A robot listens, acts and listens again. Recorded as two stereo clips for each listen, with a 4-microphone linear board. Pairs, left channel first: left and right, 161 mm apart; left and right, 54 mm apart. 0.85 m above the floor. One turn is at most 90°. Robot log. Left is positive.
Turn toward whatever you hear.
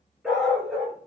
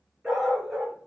cmd yaw -30
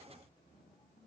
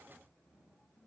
cmd idle
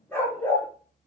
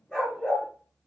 note: So it is at 15° left.
cmd yaw +15
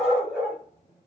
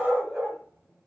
end: Found it: a dog barking, straight ahead.